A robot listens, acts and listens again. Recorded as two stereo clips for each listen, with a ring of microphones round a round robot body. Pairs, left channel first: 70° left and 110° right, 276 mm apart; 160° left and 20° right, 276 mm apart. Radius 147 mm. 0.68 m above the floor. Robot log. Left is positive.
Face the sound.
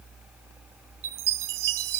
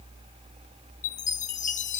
note: The chime: 135° right.
cmd yaw -135
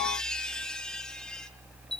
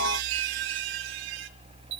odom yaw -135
note: The chime is now 20° right.
cmd yaw -20
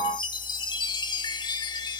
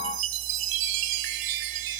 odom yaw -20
note: The chime is now 10° right.
cmd yaw -10
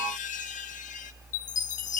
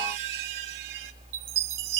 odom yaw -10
end: Facing the chime.